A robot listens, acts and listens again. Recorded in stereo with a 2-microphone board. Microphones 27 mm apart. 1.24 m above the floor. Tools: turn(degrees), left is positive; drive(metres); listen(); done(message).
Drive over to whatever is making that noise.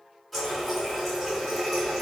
turn(degrees=30)
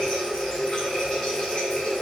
turn(degrees=150)
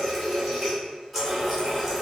drive(metres=1.0)
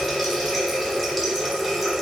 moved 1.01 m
drive(metres=1.0)
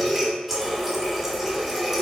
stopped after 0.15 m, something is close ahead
done("I am next to the running tap.")